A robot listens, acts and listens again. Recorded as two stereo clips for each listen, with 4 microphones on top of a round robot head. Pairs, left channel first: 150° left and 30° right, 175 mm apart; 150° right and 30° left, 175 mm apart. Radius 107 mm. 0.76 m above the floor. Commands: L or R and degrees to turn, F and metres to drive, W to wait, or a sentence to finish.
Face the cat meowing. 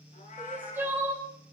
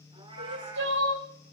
L95
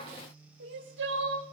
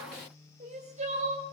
W
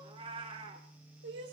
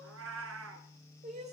L30
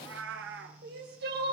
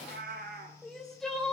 R10
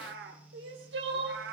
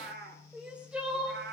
Facing the cat meowing, 1 to 2 m away.